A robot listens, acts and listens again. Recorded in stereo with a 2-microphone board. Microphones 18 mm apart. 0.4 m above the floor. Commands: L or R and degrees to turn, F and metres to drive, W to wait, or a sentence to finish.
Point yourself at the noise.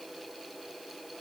W
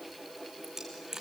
R30
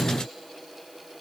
W
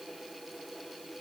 I heard a dropped coin, but can't make it out now. It was about straight ahead or 120° right.